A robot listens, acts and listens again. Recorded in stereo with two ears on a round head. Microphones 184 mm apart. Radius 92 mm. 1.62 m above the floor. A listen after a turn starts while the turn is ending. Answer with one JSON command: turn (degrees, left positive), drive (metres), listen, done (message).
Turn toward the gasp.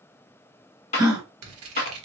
{"turn": -20}
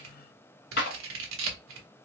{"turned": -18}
{"listen": true}
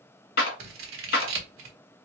{"done": "I heard a gasp, but can't make it out now. It was about straight ahead or 145° right."}